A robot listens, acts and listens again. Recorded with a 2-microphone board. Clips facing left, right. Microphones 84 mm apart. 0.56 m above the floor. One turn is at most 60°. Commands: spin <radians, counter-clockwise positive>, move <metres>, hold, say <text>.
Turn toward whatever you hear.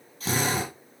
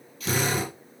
spin 0.61
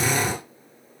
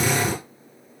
say Facing the drill.